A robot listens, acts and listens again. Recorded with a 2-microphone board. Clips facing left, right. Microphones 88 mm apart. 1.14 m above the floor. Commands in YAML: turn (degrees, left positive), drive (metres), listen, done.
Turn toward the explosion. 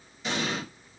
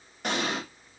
turn: -55
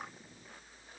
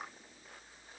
listen: true
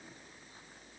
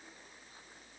done: "I heard an explosion, but can't make it out now. It was about straight ahead or 70° right."